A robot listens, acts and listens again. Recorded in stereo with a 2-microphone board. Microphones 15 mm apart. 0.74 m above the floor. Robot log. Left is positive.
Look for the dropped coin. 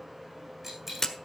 note: The dropped coin: about 20° right or 160° right.
cmd yaw -20
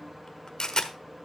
cmd idle
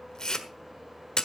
end: I heard a dropped coin, but can't make it out now. It was about straight ahead or 140° right.